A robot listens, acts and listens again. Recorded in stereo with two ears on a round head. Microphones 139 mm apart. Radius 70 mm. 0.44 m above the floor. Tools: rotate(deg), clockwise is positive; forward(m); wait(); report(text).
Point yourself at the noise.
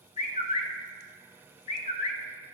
rotate(-45)
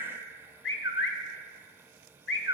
rotate(-90)
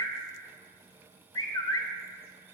rotate(-25)
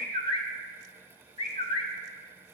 rotate(-35)
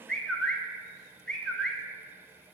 report("Found it: a bird, straight ahead, under 1 m away.")